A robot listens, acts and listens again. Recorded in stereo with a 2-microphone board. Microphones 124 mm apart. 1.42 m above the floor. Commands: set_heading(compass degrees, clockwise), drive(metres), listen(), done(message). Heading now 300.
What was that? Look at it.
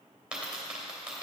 set_heading(330)
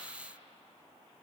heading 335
listen()
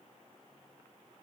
done("I heard a dropped coin, but can't make it out now. It was about 25° left or 135° right.")